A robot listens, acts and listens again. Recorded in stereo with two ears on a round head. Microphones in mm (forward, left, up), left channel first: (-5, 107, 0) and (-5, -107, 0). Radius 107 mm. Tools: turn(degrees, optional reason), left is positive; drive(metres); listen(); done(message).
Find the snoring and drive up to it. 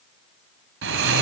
turn(degrees=-55, reason="The snoring: about 55° right or 125° right.")
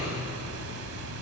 turn(degrees=-70, reason="So it is at 70° right.")
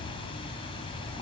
turn(degrees=25, reason="The snoring is now 25° left.")
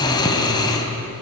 turn(degrees=20, reason="The snoring is now 20° left.")
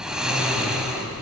drive(metres=1.0)
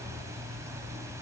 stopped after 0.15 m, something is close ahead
listen()
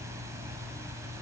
listen()
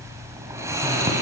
turn(degrees=-15, reason="The snoring is now 15° right.")
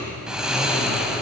done("Something is in my way. I am facing the snoring but have not reached it.")